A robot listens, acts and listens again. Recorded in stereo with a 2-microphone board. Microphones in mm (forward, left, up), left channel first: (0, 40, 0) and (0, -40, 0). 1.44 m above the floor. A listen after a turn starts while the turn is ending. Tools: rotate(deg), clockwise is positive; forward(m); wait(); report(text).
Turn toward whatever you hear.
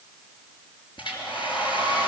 rotate(-90)
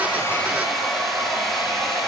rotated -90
report("Found it: a hair dryer, straight ahead.")